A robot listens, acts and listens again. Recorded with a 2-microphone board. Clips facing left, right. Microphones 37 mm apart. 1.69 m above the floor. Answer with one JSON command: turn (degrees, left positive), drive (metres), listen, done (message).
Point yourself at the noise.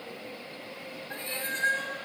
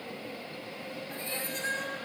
{"turn": 40}
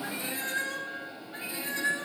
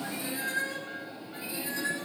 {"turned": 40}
{"turn": 45}
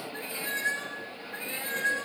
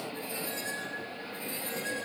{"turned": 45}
{"turn": 130}
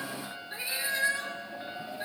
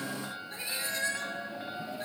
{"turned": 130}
{"turn": 10}
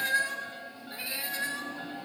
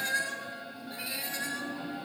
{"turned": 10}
{"done": "Facing the cat meowing."}